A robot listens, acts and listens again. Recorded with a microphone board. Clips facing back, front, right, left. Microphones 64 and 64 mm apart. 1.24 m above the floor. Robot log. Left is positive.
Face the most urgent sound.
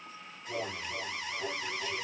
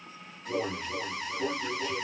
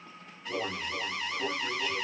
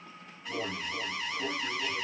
end: Found it: an alarm, straight ahead, 2 to 4 m away.